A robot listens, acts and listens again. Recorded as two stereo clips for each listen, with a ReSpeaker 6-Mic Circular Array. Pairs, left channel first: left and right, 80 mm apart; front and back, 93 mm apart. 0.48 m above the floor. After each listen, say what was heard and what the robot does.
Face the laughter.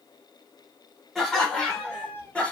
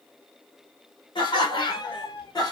The laughter: 20° left. Turn 20° left.
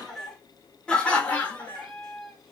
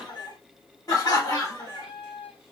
The laughter is now 35° left. Turn 35° left.
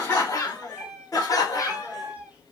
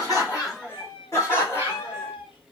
The laughter is now 55° left. Turn 55° left.
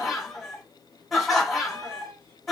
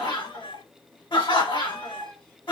Facing the laughter.